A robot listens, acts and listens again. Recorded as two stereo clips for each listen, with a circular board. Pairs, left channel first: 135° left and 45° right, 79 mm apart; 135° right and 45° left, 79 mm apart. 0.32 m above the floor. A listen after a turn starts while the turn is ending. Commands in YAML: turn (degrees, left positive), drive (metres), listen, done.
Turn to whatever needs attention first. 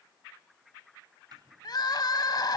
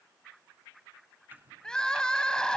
turn: 145
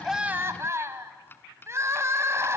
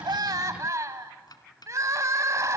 done: "Facing the crying, 1 to 2 m away."